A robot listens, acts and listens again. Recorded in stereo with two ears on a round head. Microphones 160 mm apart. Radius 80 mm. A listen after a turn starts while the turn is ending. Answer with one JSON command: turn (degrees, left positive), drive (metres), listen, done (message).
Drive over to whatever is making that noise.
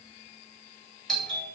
{"turn": 30}
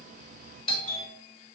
{"turn": 140}
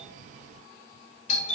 {"turn": 50}
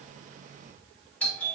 {"turn": 10}
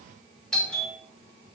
{"drive": 1.0}
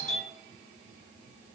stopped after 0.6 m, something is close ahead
{"done": "Arrived at the doorbell, straight ahead."}